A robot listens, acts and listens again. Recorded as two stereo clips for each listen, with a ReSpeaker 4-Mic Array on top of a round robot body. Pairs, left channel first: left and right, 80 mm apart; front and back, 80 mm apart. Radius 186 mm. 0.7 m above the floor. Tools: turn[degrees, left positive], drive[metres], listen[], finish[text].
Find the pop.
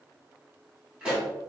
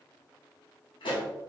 Thought: The pop: 10° right.
Action: turn[-10]
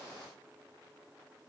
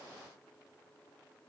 Action: finish[Facing where the pop came from. I can't hear it now.]